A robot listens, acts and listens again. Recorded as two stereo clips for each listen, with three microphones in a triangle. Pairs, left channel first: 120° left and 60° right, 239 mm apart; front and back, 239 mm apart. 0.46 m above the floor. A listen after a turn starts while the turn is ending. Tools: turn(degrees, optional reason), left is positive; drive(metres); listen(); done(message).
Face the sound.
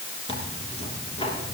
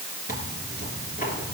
turn(degrees=55, reason="The tearing paper: 55° left.")
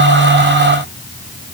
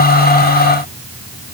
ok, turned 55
listen()
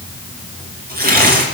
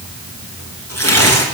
turn(degrees=-10, reason="The tearing paper is now 10° right.")
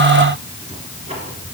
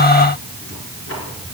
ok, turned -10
done("Facing the tearing paper, 2 to 4 m away.")